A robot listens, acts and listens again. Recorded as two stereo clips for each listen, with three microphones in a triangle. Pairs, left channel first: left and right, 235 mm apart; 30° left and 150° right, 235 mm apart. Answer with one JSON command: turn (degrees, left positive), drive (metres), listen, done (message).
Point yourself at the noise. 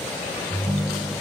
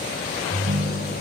{"turn": -145}
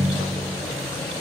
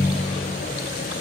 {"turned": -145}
{"turn": -50}
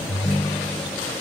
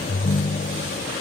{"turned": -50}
{"turn": -10}
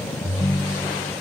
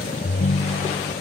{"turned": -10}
{"done": "Found it: a ringtone, straight ahead."}